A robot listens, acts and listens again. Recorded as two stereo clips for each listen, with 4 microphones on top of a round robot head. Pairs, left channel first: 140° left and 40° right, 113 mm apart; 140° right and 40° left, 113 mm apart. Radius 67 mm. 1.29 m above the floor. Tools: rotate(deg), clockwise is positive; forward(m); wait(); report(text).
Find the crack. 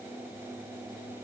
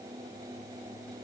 wait()
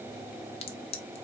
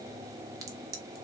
rotate(-105)
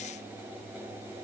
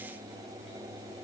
report("I heard a crack from this way, but can't make it out now.")